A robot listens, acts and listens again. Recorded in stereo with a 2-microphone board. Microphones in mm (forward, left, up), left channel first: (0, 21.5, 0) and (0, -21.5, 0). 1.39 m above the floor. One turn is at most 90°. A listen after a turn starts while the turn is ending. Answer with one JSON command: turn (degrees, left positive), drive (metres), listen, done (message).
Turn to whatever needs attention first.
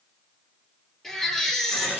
{"turn": 30}
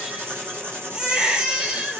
{"turn": -20}
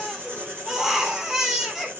{"turn": -10}
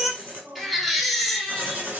{"done": "Found it: a baby crying, straight ahead."}